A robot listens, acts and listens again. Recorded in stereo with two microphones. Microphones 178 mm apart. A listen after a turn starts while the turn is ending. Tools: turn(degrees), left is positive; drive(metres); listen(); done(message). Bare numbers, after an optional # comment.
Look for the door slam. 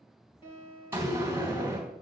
turn(-30)
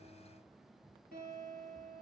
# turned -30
listen()
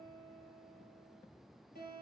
done("I heard a door slam, but can't make it out now. It was about 20° left or 140° right.")